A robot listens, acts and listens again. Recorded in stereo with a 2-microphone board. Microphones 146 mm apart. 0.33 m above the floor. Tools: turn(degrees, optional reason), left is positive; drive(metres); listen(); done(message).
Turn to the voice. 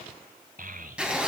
turn(degrees=-65, reason="The child speaking: about 65° right or 115° right.")
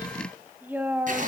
turn(degrees=-15, reason="So it is at 15° right.")
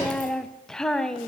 done("Found it: a child speaking, straight ahead, 1 to 2 m away.")